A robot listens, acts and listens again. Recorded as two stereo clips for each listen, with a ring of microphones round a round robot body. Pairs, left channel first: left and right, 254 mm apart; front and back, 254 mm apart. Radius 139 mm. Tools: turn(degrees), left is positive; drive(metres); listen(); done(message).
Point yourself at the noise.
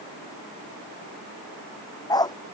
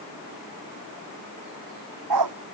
turn(degrees=165)
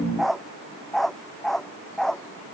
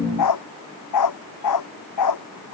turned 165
done("Found it: a dog barking, straight ahead.")